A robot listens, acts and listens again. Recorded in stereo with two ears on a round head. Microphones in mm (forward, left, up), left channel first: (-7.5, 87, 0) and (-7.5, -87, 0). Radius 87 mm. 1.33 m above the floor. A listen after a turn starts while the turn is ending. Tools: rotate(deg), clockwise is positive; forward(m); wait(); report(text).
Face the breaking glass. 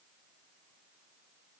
wait()
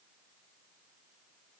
wait()
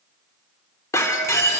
rotate(-15)
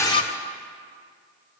rotate(-150)
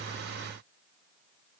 report("I heard breaking glass from this way, but can't make it out now.")